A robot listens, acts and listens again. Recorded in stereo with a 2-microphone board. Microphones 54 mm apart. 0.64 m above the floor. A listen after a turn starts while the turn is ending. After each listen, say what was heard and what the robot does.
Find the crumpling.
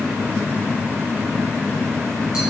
Keep listening.
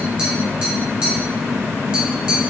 Keep listening.
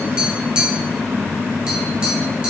I can't make out crumpling to turn to.